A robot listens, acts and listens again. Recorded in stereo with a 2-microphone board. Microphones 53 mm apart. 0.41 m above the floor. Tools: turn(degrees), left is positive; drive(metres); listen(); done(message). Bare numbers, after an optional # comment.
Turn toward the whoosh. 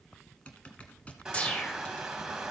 # The whoosh: about 25° left or 155° left.
turn(25)
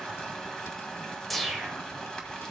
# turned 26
done("Facing the whoosh.")